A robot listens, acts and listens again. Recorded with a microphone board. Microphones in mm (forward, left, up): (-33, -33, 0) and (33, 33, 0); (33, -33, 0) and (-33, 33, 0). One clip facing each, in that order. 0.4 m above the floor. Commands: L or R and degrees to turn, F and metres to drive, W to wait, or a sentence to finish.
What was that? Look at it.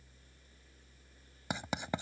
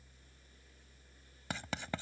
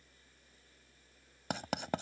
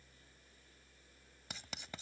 R65
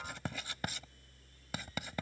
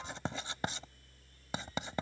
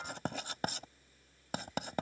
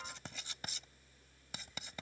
R20
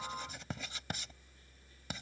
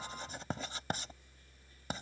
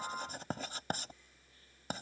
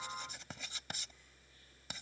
Facing the writing.